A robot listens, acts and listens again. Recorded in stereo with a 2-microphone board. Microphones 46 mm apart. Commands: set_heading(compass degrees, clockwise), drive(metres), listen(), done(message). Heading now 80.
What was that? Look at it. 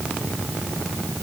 listen()
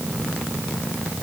listen()
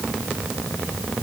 done("I can't make out anything to turn to.")